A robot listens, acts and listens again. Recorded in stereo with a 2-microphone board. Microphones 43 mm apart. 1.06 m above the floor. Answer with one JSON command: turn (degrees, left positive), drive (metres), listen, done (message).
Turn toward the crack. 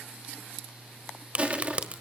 {"turn": -35}
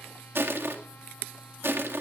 {"listen": true}
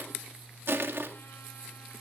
{"done": "I heard a crack, but can't make it out now. It was about straight ahead or 110° right."}